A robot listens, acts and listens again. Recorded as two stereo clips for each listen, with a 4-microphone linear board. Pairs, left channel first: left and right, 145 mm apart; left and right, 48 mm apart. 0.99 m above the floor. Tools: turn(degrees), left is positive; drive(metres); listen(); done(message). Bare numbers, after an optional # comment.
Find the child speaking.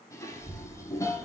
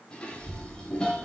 turn(-90)
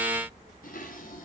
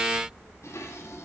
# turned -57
# So it is at 35° right.
turn(-35)
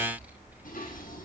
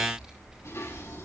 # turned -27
# The child speaking is now 15° right.
turn(-15)
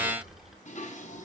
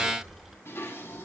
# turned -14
done("Facing the child speaking, over 4 m away.")